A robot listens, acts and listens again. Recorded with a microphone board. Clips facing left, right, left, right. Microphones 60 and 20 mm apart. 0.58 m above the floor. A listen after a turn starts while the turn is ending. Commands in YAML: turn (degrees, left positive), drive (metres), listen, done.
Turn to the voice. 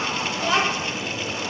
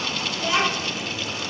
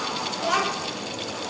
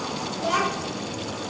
turn: 55
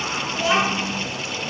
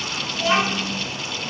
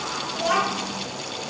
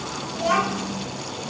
turn: 15
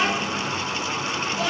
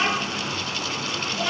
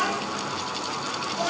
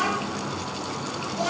done: "Facing the child speaking."